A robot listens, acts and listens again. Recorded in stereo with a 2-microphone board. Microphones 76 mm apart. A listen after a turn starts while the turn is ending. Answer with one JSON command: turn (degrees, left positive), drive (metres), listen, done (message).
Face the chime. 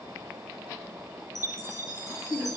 {"turn": 50}
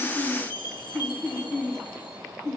{"turn": 80}
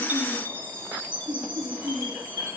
{"turn": 30}
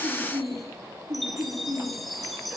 {"done": "Facing the chime, 2 to 4 m away."}